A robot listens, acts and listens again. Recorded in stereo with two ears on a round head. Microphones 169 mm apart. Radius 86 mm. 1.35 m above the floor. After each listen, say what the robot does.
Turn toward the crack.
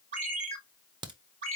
Turn 25° right.
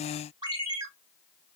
Keep listening.
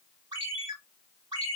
I heard a crack, but can't make it out now. It was about straight ahead or 130° right.